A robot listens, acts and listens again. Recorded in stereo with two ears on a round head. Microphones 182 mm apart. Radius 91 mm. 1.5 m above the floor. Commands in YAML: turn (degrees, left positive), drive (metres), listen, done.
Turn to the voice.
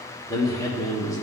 turn: 15
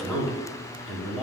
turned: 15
done: "Facing the man speaking, 1 to 2 m away."